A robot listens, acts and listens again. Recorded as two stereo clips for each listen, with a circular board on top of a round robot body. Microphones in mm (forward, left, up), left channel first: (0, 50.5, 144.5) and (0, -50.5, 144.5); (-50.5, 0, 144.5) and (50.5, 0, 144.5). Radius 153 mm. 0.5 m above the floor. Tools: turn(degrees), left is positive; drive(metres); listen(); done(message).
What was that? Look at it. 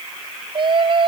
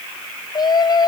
turn(degrees=-130)
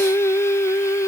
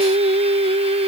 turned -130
turn(degrees=25)
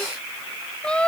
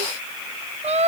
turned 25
turn(degrees=10)
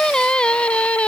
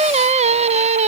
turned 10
turn(degrees=10)
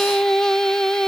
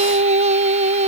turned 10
done("Found it: singing, straight ahead.")